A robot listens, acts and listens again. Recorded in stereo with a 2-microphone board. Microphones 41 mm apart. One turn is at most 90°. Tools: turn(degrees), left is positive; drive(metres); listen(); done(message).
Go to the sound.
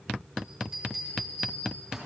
turn(degrees=-30)
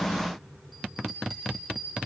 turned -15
drive(metres=1.0)
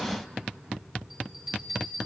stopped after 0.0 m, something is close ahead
done("Blocked. The bell is further on, straight ahead.")